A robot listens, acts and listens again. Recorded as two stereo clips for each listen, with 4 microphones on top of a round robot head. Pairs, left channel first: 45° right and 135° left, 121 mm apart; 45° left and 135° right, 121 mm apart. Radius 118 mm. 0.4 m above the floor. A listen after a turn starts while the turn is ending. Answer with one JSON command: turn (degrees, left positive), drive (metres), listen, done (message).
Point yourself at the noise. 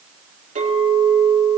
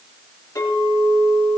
{"turn": 115}
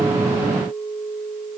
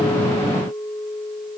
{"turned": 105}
{"turn": 10}
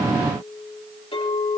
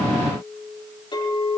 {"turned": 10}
{"done": "Facing the clink."}